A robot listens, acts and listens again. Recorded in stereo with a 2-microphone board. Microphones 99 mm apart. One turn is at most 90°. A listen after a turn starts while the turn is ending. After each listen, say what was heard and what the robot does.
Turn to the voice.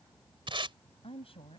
Turn 90° left.
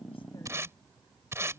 Keep listening.
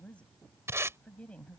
The woman speaking is now 10° left. Turn 10° left.
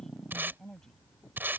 Found it: a woman speaking, straight ahead.